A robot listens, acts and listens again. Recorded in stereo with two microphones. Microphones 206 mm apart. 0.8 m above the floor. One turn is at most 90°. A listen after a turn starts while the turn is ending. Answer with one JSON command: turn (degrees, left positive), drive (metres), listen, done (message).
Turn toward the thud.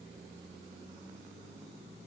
{"listen": true}
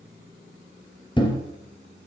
{"turn": 25}
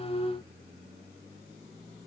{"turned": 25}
{"listen": true}
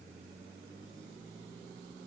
{"done": "I heard a thud, but can't make it out now. It was about straight ahead or 130° left."}